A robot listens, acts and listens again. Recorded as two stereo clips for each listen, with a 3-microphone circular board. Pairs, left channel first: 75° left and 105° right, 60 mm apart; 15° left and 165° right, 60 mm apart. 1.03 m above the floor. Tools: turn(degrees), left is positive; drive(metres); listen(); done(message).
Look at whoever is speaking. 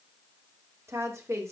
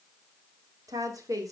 turn(degrees=-145)
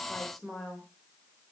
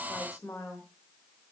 turn(degrees=-15)
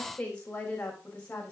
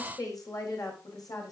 done("Facing the woman speaking.")